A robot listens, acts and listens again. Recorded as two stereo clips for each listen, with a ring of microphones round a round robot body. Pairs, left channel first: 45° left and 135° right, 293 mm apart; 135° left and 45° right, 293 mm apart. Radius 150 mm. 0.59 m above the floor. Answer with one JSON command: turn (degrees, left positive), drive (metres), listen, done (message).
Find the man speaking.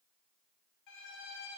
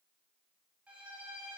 {"listen": true}
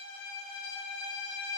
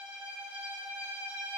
{"listen": true}
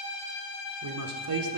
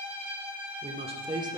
{"turn": -120}
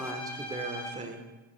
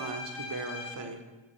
{"turn": -70}
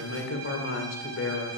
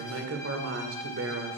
{"done": "Found it: a man speaking, straight ahead."}